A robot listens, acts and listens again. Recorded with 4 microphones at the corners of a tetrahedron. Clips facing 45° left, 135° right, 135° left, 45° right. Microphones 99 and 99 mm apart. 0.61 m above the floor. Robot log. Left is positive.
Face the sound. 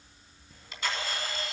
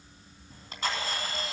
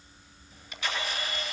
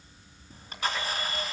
note: The camera shutter: 90° right.
cmd yaw -90
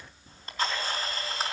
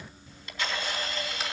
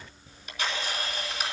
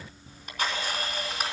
end: Facing the camera shutter.